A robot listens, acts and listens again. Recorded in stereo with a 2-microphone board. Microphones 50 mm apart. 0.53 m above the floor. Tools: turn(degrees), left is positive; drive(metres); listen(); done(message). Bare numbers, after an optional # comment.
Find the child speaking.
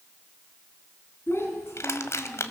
# The child speaking: about 55° left or 125° left.
turn(55)
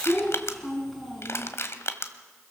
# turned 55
done("Facing the child speaking.")